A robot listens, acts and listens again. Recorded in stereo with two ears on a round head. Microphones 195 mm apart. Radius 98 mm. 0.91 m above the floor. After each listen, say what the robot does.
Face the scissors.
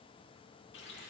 Keep listening.
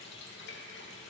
Keep listening.
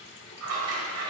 Turn 90° right.
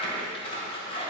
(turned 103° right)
Turn 25° left.
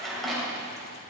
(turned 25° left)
Found it: scissors, straight ahead.